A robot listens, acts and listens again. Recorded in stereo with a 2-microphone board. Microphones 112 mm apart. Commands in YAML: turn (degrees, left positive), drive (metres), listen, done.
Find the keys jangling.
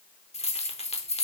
turn: 60
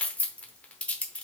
turn: 10
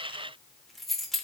done: "Found it: keys jangling, straight ahead."